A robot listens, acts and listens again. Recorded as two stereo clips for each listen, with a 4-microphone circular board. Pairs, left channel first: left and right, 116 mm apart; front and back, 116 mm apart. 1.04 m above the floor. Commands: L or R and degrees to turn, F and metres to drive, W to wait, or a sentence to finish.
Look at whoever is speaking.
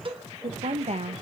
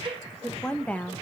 R75
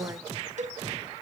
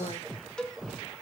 R25
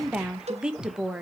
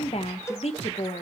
Facing the woman speaking.